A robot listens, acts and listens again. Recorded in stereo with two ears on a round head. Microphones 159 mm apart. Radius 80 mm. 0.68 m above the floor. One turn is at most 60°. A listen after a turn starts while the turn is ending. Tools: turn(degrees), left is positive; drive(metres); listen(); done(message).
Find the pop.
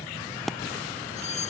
turn(degrees=30)
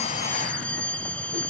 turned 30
listen()
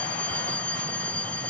done("I heard a pop, but can't make it out now. It was about 30° right or 150° left.")